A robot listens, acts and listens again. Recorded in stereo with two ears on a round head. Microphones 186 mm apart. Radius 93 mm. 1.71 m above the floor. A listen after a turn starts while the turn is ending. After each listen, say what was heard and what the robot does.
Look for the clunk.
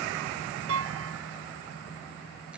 The clunk: about 70° right or 110° right. Turn 70° right.
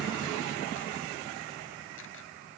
Keep listening.
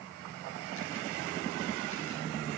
I heard a clunk, but can't make it out now. It was about straight ahead or 40° right.